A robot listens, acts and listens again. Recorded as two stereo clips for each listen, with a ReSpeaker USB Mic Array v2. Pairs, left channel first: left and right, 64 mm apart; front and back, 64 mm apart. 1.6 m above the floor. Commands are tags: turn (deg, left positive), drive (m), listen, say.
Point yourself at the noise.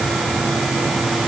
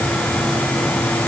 <listen/>
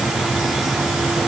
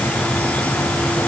<listen/>
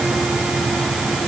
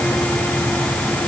<say>I can't make out anything to turn to.</say>